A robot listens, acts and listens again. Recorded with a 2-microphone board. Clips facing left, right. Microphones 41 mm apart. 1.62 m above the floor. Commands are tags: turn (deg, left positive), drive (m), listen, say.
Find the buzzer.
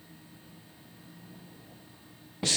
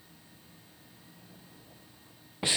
<listen/>
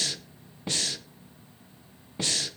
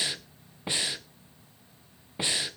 <listen/>
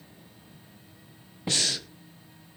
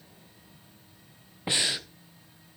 <say>I can't make out a buzzer to turn to.</say>